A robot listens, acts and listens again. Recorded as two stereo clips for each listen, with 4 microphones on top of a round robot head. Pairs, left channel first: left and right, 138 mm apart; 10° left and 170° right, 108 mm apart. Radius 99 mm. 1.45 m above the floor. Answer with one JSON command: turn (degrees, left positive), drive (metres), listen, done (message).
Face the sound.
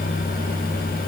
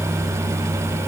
{"listen": true}
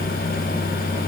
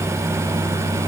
{"listen": true}
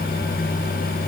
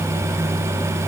{"done": "I can't make out anything."}